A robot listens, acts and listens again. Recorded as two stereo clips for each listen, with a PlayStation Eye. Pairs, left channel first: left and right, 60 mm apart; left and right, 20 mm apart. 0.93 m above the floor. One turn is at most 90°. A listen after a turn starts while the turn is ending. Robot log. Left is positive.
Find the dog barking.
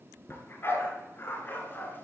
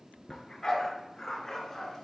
note: The dog barking: about 35° left or 145° left.
cmd yaw +35
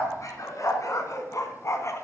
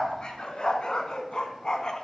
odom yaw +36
note: So it is at 130° left.
cmd yaw +90
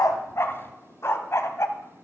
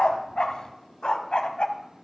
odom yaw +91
note: The dog barking is now 50° left.
cmd yaw +50
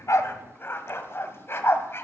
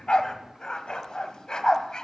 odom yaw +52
note: The dog barking is now 40° left.
cmd yaw +40
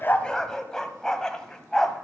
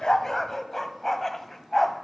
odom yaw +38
note: The dog barking is now 10° left.
cmd yaw +10
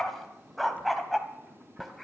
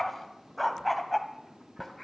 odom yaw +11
end: Facing the dog barking.